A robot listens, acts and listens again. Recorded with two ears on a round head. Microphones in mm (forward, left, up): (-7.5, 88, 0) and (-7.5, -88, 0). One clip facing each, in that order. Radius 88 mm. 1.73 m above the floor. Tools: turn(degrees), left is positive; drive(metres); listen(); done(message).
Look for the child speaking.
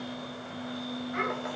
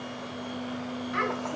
turn(degrees=-70)
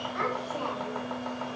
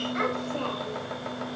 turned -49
turn(degrees=-30)
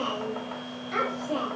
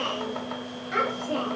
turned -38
turn(degrees=-10)
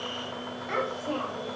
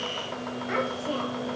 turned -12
turn(degrees=-10)
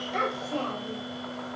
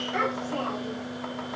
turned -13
done("Found it: a child speaking, straight ahead.")